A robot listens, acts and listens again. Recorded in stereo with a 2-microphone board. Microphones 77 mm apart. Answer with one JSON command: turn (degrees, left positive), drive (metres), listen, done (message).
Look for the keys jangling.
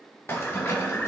{"turn": 30}
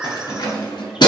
{"turn": 105}
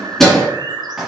{"done": "Facing the keys jangling."}